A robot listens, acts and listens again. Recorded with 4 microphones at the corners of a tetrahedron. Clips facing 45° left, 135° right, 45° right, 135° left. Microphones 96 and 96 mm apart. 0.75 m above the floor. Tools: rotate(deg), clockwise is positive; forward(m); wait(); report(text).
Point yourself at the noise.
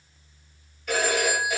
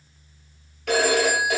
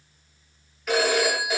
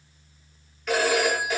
rotate(130)
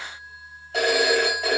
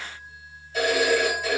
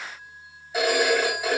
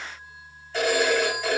rotate(-35)
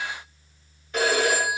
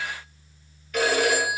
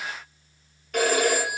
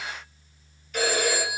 rotate(15)
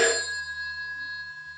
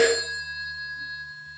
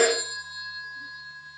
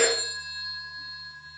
report("Facing the phone ringing.")